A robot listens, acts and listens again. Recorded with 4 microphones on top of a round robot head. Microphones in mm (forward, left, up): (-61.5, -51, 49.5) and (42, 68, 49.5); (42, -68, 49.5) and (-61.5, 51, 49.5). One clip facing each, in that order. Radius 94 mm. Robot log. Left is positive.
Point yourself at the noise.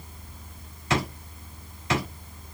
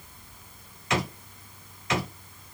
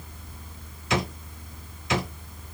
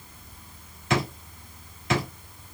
note: The drawer: 170° left.
cmd yaw +170
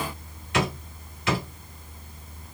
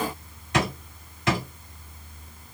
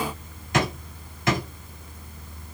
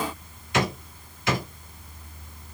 end: Found it: a drawer, straight ahead.